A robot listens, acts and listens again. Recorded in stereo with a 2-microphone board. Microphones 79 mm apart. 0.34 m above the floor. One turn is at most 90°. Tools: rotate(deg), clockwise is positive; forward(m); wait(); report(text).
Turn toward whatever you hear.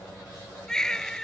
rotate(-30)
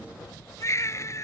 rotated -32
rotate(-90)
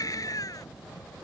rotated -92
rotate(-50)
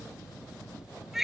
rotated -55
report("Facing the baby crying.")